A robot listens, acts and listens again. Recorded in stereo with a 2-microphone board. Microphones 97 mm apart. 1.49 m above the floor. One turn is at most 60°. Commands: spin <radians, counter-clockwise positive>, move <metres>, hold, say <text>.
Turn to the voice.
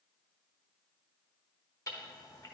hold
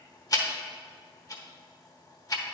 hold
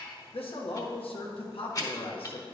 spin 1.05
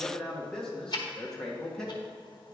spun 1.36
say Facing the man speaking.